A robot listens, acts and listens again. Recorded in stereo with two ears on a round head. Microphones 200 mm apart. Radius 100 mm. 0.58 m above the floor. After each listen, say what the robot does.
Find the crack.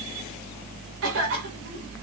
Keep listening.
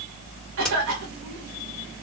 Turn 30° left.
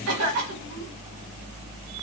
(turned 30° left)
Keep listening.
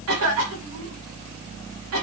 I heard a crack, but can't make it out now. It was about 25° right or 145° left.